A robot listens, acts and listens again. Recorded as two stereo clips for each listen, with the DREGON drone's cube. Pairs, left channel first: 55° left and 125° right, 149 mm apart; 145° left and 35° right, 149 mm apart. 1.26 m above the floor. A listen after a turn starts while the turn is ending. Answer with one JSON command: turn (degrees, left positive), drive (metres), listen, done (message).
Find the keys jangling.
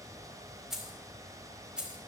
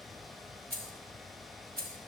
{"turn": -40}
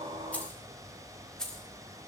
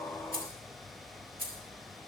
{"turn": -30}
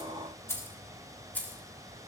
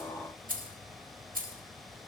{"turn": -25}
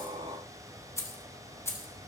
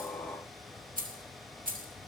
{"turn": -15}
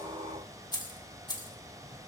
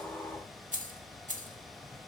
{"done": "Found it: keys jangling, straight ahead, 2 to 4 m away."}